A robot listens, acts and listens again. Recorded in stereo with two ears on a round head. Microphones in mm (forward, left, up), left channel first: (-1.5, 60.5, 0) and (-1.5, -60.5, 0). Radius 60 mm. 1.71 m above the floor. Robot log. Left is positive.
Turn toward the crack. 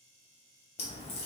note: The crack: about 50° left or 130° left.
cmd yaw +50
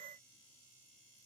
cmd idle
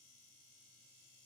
end: I heard a crack, but can't make it out now. It was about straight ahead or 80° left.